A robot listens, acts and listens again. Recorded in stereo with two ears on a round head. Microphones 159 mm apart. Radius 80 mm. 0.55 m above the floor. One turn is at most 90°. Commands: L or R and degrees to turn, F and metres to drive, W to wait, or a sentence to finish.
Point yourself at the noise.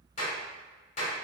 L40
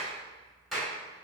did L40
Facing the clap.